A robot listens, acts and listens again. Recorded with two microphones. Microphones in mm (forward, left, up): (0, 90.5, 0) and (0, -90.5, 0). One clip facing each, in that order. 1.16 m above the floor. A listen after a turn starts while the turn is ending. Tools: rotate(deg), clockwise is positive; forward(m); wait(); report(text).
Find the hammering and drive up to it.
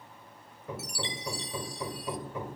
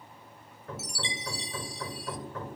rotate(-30)
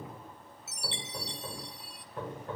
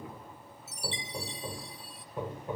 rotate(15)
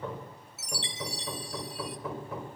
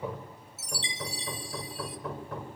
forward(1.0)
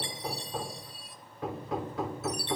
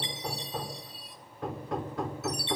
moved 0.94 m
forward(1.0)
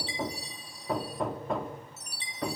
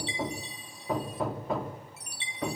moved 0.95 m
forward(1.0)
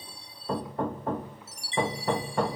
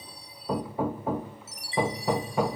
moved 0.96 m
forward(1.0)
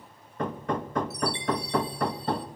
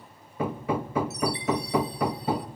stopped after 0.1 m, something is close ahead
report("Arrived at the hammering, straight ahead.")